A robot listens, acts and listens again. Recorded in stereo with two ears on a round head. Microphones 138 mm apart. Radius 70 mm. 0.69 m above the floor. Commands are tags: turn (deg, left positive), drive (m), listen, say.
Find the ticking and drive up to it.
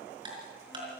<turn deg="-30"/>
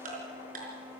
<turn deg="-120"/>
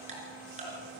<turn deg="-45"/>
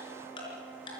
<turn deg="30"/>
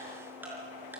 <listen/>
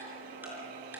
<listen/>
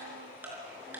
<turn deg="-10"/>
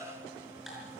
<listen/>
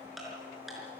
<drive m="1.0"/>
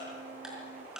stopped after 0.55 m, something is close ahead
<say>Blocked. The ticking is further on, straight ahead.</say>